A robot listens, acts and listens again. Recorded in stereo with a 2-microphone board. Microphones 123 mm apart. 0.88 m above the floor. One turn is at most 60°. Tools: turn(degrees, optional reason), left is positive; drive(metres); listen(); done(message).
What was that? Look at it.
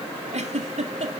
turn(degrees=-60, reason="The giggle: about 65° right or 115° right.")
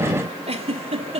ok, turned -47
turn(degrees=-60, reason="So it is at 60° right.")
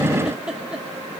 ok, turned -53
done("Facing the giggle.")